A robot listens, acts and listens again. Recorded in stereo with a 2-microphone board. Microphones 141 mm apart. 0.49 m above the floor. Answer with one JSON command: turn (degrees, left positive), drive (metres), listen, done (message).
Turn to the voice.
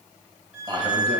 {"turn": -35}
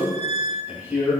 {"turn": -10}
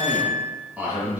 {"turn": -10}
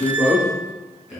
{"done": "Facing the man speaking, 2 to 4 m away."}